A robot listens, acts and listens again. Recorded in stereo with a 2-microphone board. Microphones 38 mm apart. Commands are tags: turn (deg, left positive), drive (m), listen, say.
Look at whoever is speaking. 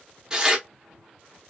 <listen/>
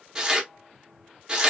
<listen/>
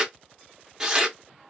<say>I can't make out anyone speaking, only tearing paper.</say>